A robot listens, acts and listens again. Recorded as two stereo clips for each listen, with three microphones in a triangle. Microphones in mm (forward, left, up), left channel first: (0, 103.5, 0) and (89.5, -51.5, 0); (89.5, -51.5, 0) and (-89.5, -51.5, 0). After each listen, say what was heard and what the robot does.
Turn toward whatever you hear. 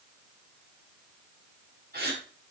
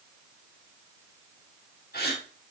The gasp: 30° right. Turn 30° right.
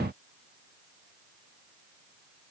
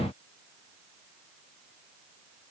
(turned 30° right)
Facing where the gasp came from. I can't hear it now.